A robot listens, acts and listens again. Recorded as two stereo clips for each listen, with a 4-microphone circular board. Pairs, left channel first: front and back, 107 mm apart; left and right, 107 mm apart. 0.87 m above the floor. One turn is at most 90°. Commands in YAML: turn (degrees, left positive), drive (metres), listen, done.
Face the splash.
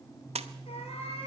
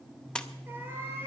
turn: 90
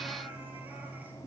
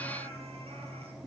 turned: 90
turn: 85
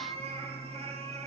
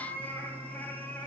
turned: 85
done: "I heard a splash from this way, but can't make it out now."